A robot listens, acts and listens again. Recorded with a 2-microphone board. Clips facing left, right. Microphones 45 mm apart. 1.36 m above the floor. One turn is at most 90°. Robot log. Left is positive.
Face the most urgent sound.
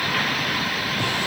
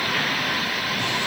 cmd idle
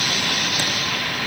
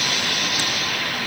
cmd idle
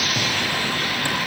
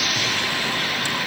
end: I can't make out anything urgent to turn to.